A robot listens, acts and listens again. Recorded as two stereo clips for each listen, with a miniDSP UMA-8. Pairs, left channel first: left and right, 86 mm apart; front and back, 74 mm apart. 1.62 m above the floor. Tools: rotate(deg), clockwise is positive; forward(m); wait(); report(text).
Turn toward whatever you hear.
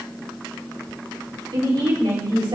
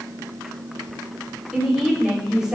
rotate(100)
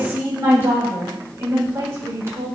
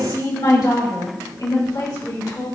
rotate(35)
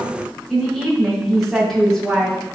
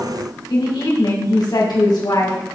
report("Facing the woman speaking, over 4 m away.")